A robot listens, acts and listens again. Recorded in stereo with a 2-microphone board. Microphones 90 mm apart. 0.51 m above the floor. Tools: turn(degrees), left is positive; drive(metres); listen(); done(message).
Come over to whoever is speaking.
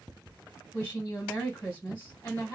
turn(degrees=25)
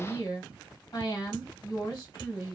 turn(degrees=125)
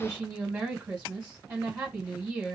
turn(degrees=-10)
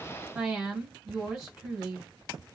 drive(metres=1.0)
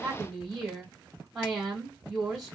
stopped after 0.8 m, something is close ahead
done("Arrived at the woman speaking, straight ahead.")